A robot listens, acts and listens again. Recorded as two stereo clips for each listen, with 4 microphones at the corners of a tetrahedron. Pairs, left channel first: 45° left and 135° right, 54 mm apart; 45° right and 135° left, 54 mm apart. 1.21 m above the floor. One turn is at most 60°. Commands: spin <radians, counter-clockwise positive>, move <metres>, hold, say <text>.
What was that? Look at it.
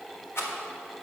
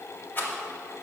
say Facing the rattle.